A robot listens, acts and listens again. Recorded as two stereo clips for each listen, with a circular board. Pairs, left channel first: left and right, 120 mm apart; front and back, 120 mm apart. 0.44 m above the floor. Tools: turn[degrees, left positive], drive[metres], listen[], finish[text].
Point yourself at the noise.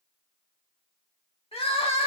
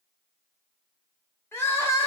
Thought: The crying: 65° left.
Action: turn[65]
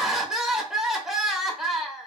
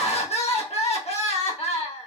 Action: finish[Found it: crying, straight ahead, under 1 m away.]